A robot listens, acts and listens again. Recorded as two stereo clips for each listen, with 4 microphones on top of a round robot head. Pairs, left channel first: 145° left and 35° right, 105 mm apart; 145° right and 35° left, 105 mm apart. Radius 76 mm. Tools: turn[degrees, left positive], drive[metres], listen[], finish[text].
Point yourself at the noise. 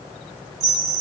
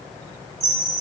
Action: finish[Facing the chime, 1 to 2 m away.]